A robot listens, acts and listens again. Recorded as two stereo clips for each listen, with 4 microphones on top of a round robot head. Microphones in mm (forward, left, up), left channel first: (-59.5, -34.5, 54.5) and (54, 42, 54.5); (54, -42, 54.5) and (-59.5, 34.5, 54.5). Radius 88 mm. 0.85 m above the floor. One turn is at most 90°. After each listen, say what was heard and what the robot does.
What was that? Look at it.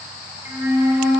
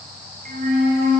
The flute: 110° left. Turn 90° left.
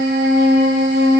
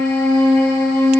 The flute is now 45° left. Turn 45° left.
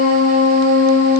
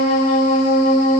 Found it: a flute, straight ahead, under 1 m away.